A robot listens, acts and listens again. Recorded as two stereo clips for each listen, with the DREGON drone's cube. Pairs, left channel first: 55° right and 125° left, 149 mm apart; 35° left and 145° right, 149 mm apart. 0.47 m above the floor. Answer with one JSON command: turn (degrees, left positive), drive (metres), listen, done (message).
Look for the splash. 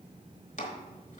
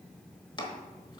{"listen": true}
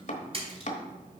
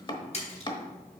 {"turn": 75}
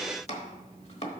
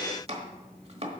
{"done": "Facing where the splash came from. I can't hear it now."}